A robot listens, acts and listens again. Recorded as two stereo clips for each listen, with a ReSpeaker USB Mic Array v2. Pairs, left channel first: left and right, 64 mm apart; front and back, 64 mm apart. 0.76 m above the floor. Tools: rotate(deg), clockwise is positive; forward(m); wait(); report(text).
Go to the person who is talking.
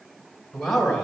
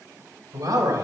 rotate(-175)
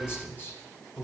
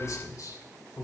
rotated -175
rotate(-35)
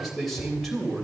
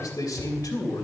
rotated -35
forward(1.0)
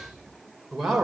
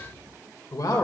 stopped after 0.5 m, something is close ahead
report("Something is in my way. I am facing the man speaking but have not reached it.")